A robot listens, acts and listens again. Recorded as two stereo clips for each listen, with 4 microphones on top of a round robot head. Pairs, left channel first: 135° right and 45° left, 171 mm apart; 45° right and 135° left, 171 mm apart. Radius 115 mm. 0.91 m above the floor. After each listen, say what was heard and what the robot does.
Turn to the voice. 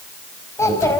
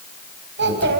The child speaking: 150° left. Turn 150° left.
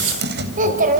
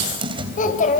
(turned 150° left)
Facing the child speaking.